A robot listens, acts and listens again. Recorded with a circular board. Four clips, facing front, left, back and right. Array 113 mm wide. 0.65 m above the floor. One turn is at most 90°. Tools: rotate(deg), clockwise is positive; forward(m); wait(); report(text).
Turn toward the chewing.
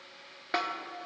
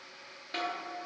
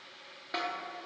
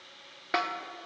wait()
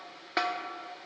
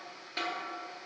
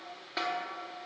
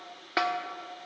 wait()
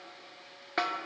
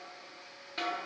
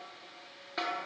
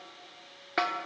report("I can't make out chewing, only a snare drum.")